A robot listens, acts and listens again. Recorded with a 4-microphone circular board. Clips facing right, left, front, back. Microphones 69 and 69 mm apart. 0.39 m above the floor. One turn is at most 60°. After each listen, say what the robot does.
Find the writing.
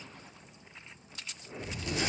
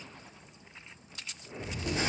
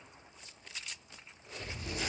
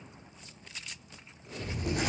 Turn 60° left.
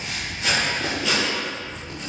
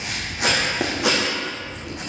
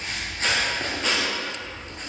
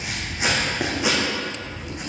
Turn 60° left.
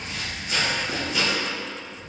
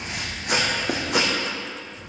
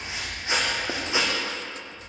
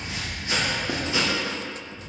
Turn 60° left.
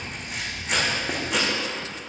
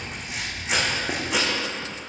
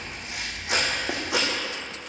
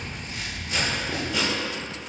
Found it: writing, straight ahead, 2 to 4 m away.